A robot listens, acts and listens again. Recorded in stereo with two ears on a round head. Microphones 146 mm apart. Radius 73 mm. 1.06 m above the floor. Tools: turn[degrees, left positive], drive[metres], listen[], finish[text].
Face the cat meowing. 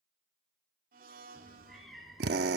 Action: turn[30]
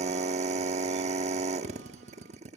Action: listen[]
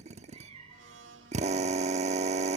Thought: So it is at 35° right.
Action: turn[-35]
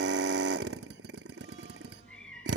Thought: The cat meowing is now 10° left.
Action: turn[10]
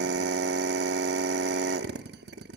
Action: listen[]
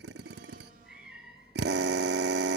Action: finish[Found it: a cat meowing, straight ahead, over 4 m away.]